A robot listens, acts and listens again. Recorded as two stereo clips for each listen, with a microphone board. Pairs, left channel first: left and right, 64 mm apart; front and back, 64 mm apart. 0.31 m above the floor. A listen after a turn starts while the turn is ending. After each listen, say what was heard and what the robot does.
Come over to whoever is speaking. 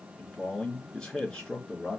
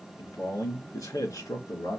The man speaking: 10° left. Turn 10° left.
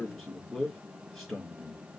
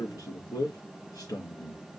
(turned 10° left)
Drive 1.0 m forward.
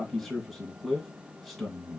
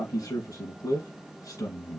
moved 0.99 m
Drive 1.0 m forward.
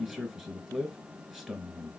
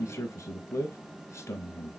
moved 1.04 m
The man speaking is now 10° right. Turn 10° right.
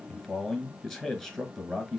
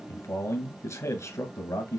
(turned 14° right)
Drive 1.0 m forward.
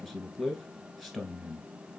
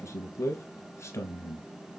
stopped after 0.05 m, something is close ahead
I am next to the man speaking.